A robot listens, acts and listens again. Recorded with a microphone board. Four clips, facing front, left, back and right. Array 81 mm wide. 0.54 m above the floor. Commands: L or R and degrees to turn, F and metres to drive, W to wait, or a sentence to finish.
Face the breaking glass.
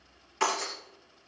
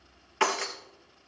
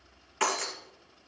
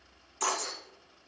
L95
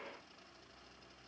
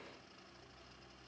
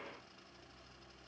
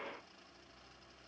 I heard breaking glass from this way, but can't make it out now.